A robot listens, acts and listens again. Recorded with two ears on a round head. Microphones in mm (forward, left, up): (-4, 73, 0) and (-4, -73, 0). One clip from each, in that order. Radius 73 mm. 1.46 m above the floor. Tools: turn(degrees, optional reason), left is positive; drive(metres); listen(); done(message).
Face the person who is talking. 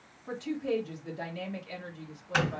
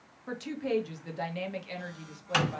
turn(degrees=-30, reason="The woman speaking: about 30° right or 150° right.")
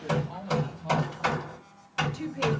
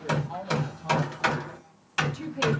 done("Facing the woman speaking.")